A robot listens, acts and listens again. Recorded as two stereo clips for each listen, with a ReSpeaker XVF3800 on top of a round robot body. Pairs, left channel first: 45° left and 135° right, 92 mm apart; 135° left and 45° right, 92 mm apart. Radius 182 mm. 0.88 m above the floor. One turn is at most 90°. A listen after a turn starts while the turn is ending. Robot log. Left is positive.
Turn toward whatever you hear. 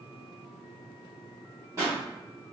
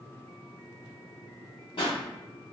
note: The pop: 165° left.
cmd yaw +90
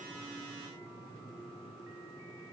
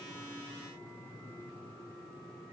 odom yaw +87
note: Nothing new. It was at 80° left.
cmd yaw +80
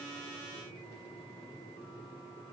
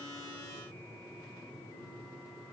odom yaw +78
end: Facing where the pop came from. I can't hear it now.